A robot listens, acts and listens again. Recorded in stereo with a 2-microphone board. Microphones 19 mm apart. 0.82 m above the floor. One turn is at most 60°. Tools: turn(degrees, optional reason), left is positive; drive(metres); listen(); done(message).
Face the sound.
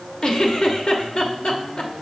turn(degrees=55, reason="The giggle: about 55° left or 125° left.")
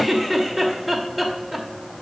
done("Facing the giggle, under 1 m away.")